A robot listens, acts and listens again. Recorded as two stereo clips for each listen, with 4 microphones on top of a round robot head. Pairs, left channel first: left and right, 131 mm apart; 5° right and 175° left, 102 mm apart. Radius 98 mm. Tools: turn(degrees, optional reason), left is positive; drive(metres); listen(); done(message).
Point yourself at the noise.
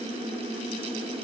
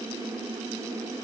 listen()
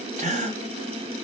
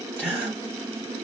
turn(degrees=-110, reason="The gasp: 110° right.")
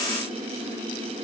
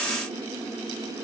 done("Facing where the gasp came from. I can't hear it now.")